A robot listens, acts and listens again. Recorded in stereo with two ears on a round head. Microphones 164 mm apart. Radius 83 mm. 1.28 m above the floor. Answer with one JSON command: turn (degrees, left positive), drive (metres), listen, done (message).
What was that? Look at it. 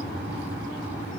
{"listen": true}
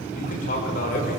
{"turn": 45}
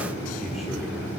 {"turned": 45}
{"listen": true}
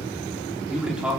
{"done": "Facing the man speaking, 2 to 4 m away."}